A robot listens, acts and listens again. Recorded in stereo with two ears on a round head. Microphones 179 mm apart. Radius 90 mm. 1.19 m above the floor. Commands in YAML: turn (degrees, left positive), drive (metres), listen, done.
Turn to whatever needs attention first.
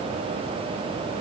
listen: true
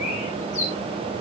listen: true
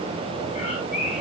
done: "I can't make out anything urgent, only a bird."